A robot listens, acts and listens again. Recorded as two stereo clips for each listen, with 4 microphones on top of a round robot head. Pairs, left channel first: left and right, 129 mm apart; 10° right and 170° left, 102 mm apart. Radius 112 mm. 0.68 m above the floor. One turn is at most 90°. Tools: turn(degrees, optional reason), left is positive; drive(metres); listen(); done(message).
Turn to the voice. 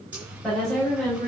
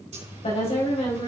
done("Facing the woman speaking.")